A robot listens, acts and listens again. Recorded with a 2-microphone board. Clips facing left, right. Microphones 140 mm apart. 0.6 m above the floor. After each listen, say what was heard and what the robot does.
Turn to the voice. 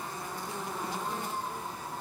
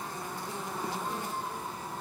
Keep listening.
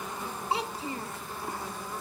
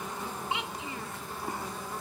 The child speaking: about 40° left or 140° left. Turn 40° left.
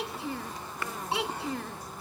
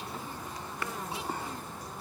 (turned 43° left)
So it is at 100° left. Turn 100° left.
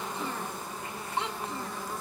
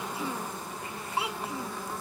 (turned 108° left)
The child speaking is now 10° right. Turn 10° right.
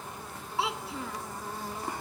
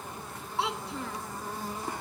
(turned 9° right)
Facing the child speaking.